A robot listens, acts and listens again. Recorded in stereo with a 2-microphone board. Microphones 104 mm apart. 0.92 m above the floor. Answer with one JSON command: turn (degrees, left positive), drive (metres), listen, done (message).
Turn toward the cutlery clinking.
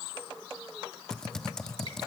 {"listen": true}
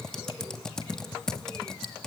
{"listen": true}
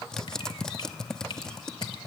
{"done": "I can't make out cutlery clinking to turn to."}